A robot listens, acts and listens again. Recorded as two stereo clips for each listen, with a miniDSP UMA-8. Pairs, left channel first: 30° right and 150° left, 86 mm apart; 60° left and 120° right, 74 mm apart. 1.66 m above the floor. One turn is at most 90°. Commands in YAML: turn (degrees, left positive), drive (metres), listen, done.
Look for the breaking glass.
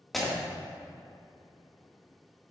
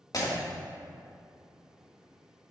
turn: 60
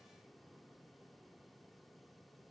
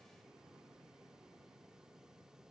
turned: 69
turn: -10
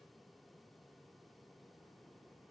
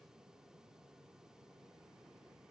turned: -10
done: "Facing where the breaking glass came from. I can't hear it now."